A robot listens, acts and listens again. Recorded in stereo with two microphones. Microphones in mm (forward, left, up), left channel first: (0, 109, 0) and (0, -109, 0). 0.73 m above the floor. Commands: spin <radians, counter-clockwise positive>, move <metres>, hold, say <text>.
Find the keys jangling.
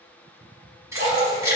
spin -0.52
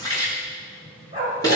spin 0.35
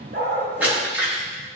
spin -0.17
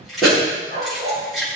say Facing the keys jangling, over 4 m away.